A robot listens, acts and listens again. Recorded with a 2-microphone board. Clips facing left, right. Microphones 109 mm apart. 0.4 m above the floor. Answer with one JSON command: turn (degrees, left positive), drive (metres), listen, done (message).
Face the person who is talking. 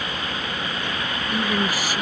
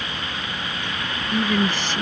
{"turn": 30}
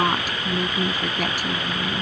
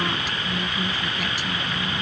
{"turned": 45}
{"turn": 130}
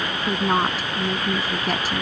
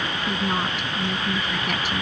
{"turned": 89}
{"turn": 40}
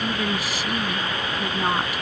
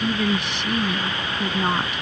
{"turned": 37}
{"done": "Facing the woman speaking."}